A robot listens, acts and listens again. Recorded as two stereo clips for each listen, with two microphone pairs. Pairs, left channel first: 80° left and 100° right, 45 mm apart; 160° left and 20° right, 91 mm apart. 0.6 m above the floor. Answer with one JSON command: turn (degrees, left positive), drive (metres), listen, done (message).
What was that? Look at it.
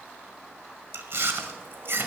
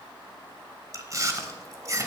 {"turn": -75}
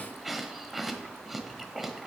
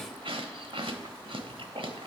{"turn": -15}
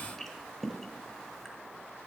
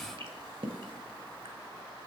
{"done": "Found it: chewing, straight ahead, 1 to 2 m away."}